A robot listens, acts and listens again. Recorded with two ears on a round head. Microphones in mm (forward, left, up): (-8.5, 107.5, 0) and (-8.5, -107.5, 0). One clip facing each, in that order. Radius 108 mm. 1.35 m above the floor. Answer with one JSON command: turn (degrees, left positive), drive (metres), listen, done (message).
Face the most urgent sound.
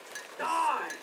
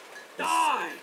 {"turn": -50}
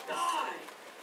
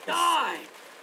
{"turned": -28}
{"turn": -105}
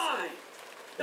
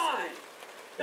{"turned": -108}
{"done": "Facing the shout, 1 to 2 m away."}